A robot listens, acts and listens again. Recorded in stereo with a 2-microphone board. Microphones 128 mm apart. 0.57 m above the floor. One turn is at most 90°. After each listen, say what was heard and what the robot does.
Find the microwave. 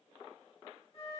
Keep listening.
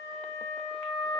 Keep listening.
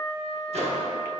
The microwave: about 55° right or 125° right. Turn 55° right.
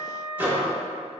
So it is at 15° right. Turn 15° right.
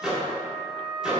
Found it: a microwave, straight ahead, under 1 m away.